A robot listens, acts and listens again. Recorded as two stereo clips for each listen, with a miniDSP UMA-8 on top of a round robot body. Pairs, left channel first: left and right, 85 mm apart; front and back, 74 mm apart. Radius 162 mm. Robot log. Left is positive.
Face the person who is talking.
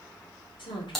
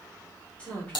note: The woman speaking: 70° left.
cmd yaw +70
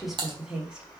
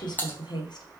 note: The woman speaking is now 10° right.
cmd yaw -10
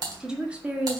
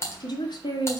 note: The woman speaking is now 20° right.
cmd yaw -20
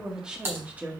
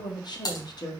note: The woman speaking is now 20° right.
cmd yaw -20
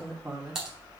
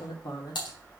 note: The woman speaking is now 15° right.
cmd yaw -15
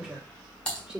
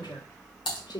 note: The woman speaking is now 10° right.
cmd yaw -10
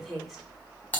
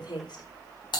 end: Facing the woman speaking.